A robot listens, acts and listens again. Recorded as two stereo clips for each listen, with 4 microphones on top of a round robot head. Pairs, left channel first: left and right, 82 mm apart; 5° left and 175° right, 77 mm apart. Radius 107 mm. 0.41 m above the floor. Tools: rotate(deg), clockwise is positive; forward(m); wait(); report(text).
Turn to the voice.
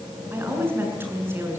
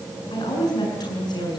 rotate(30)
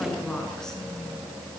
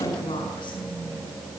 wait()
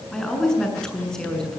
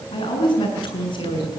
report("Facing the woman speaking, over 4 m away.")